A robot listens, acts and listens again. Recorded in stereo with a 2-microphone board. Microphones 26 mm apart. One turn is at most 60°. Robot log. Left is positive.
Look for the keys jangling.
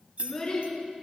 note: The keys jangling: about 55° right or 125° right.
cmd yaw -55
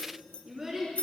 note: So it is at 60° left.
cmd yaw +60
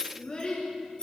note: The keys jangling is now 35° left.
cmd yaw +35
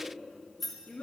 end: Facing the keys jangling, 2 to 4 m away.